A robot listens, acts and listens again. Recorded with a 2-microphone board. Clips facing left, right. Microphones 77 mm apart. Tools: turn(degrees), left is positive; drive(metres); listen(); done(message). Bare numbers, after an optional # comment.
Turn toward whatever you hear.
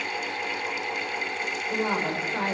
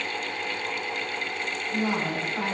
# The woman speaking: about 35° left or 145° left.
turn(35)
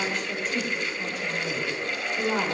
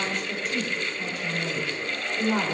done("Found it: a woman speaking, straight ahead, 2 to 4 m away.")